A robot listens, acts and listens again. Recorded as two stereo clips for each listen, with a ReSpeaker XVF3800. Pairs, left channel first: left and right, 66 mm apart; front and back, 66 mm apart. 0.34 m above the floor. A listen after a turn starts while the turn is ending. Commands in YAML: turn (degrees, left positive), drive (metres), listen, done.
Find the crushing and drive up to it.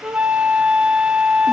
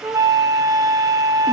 listen: true
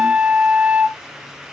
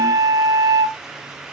listen: true
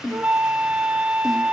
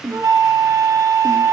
done: "I can't make out crushing to turn to."